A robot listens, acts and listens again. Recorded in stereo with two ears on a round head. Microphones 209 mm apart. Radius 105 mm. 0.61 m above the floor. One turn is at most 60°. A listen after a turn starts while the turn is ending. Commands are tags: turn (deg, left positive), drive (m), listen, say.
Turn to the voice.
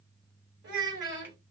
<turn deg="-50"/>
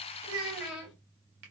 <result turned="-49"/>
<say>Facing the child speaking.</say>